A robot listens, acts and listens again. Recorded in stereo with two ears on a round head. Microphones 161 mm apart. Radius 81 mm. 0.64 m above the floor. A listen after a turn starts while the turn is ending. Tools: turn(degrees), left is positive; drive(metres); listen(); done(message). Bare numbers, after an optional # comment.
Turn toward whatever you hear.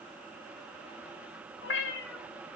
# The cat meowing: about 65° left or 115° left.
turn(65)
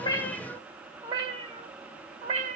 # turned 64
# So it is at 40° right.
turn(-40)
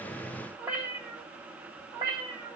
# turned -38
# The cat meowing is now 25° right.
turn(-25)
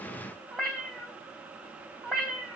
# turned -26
done("Found it: a cat meowing, straight ahead.")